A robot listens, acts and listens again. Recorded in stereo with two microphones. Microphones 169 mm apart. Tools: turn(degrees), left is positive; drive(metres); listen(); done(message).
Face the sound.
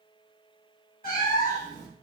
turn(degrees=50)
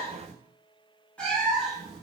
done("Facing the cat meowing, 1 to 2 m away.")